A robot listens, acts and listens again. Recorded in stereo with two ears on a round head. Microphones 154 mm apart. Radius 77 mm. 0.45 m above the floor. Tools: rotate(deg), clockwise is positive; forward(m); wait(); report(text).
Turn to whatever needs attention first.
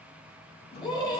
rotate(-25)
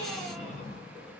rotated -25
wait()
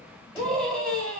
report("Facing the scream, 2 to 4 m away.")